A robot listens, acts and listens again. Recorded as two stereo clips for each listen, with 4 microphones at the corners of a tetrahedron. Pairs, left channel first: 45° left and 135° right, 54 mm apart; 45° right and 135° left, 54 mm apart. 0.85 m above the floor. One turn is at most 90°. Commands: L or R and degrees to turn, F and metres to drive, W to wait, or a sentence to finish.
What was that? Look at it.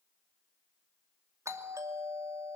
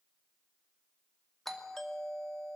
R90
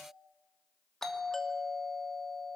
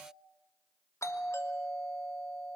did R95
R35
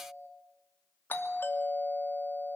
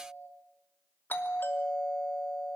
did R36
Facing the doorbell.